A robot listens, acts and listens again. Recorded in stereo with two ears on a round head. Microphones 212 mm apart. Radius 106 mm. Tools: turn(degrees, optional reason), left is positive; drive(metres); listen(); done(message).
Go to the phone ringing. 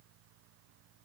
listen()
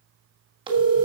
turn(degrees=-20, reason="The phone ringing: about 20° right or 160° right.")
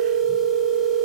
drive(metres=1.0)
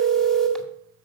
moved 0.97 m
drive(metres=1.0)
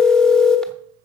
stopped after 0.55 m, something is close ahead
done("I am next to the phone ringing.")